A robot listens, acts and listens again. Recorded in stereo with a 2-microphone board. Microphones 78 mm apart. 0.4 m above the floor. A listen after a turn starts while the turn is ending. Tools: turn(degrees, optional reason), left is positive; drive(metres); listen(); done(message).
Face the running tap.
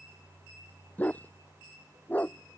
listen()
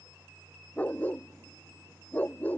listen()
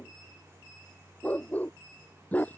done("I can't make out a running tap, only a dog barking.")